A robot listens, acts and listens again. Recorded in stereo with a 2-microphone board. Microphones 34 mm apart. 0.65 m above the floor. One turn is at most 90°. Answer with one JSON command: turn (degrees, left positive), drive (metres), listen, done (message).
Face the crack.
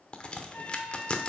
{"turn": 30}
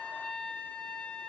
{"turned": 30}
{"listen": true}
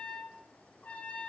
{"done": "I heard a crack, but can't make it out now. It was about straight ahead or 120° left."}